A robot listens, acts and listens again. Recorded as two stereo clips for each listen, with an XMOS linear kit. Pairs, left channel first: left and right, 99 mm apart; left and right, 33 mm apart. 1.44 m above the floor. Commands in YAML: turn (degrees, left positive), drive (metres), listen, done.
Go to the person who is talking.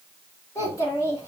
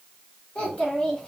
turn: 35
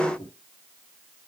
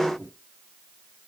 turn: 110
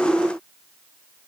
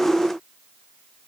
listen: true
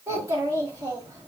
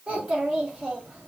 turn: -35
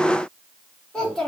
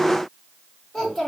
drive: 1.0
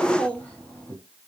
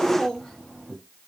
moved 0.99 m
turn: 15
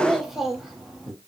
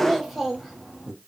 drive: 1.0
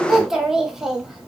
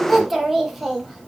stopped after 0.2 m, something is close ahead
done: "I am next to the child speaking."